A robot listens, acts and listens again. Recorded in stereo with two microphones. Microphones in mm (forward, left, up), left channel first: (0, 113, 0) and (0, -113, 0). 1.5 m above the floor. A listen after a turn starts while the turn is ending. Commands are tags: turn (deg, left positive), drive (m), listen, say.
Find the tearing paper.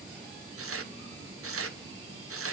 <turn deg="-90"/>
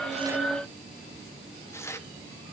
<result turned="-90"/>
<turn deg="10"/>
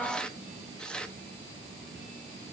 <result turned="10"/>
<say>Found it: tearing paper, straight ahead.</say>